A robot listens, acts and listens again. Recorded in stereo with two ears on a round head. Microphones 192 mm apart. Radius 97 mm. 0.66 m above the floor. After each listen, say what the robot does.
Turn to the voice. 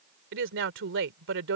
Turn 65° right.
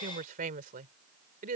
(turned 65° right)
Turn 40° right.
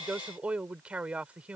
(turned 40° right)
Facing the woman speaking.